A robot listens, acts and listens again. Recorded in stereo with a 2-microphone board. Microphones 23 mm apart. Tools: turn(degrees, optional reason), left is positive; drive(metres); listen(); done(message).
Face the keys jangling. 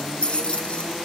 turn(degrees=60, reason="The keys jangling: about 60° left or 120° left.")
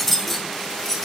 turn(degrees=20, reason="So it is at 20° left.")
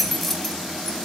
turn(degrees=10, reason="The keys jangling is now 10° left.")
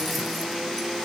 listen()
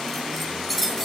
turn(degrees=10, reason="The keys jangling is now 10° left.")
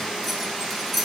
done("Found it: keys jangling, straight ahead, over 4 m away.")